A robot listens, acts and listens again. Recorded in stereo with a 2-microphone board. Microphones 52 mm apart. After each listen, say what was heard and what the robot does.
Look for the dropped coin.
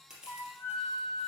Keep listening.
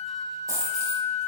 Turn 90° right.
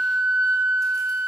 I heard a dropped coin from this way, but can't make it out now.